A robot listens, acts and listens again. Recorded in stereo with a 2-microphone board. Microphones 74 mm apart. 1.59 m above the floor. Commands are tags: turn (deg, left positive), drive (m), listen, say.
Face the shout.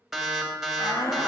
<turn deg="55"/>
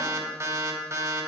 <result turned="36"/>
<listen/>
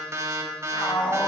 <turn deg="90"/>
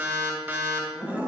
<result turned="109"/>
<turn deg="-20"/>
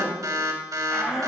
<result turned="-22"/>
<say>Facing the shout, 2 to 4 m away.</say>